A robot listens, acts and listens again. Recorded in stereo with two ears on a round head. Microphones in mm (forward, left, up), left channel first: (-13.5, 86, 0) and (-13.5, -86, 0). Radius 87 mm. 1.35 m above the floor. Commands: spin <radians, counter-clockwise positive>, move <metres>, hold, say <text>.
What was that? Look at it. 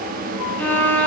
spin 0.52
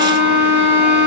spin 2.44
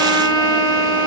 spin -0.35
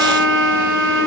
say Facing the violin, over 4 m away.